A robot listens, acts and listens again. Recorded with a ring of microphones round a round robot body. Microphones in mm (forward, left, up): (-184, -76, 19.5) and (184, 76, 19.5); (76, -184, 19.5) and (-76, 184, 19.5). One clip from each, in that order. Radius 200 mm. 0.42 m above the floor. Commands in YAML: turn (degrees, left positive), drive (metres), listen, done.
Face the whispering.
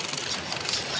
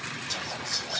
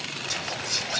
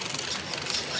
turn: -45
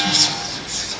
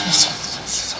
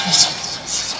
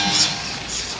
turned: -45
turn: -20
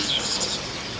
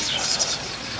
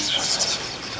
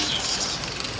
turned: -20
done: "Found it: whispering, straight ahead."